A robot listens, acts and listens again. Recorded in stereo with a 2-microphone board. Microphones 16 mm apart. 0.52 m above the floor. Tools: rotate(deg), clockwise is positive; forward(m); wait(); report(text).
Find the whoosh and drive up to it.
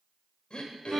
wait()
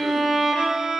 wait()
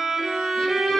report("I can't make out a whoosh, only throat clearing and a violin.")